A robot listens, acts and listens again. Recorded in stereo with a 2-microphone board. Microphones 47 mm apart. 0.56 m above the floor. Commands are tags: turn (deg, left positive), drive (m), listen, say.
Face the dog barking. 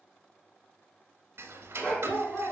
<turn deg="30"/>
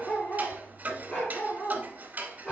<turn deg="20"/>
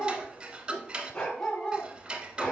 <turn deg="20"/>
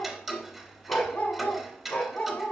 <turn deg="140"/>
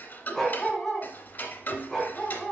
<say>Facing the dog barking.</say>